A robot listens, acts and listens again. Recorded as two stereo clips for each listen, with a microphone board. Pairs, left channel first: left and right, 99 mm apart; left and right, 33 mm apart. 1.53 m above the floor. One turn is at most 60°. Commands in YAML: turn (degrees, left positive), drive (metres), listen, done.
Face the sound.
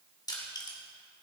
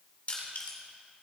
turn: 45
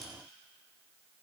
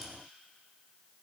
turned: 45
done: "Found it: crushing, straight ahead, 2 to 4 m away."